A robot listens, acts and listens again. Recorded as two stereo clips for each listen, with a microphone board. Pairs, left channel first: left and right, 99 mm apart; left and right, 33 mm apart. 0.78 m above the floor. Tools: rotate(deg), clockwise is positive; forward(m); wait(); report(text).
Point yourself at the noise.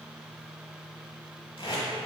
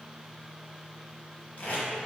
rotate(-55)
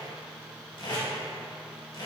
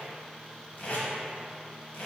rotate(-55)
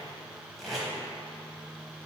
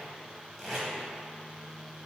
report("Facing the tape being pulled, 1 to 2 m away.")